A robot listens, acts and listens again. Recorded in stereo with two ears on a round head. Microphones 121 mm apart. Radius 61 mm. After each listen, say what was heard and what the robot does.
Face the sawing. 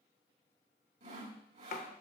The sawing: about 55° right or 125° right. Turn 55° right.
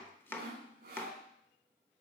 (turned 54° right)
So it is at 70° right. Turn 70° right.
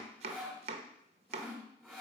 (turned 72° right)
Found it: sawing, straight ahead, 1 to 2 m away.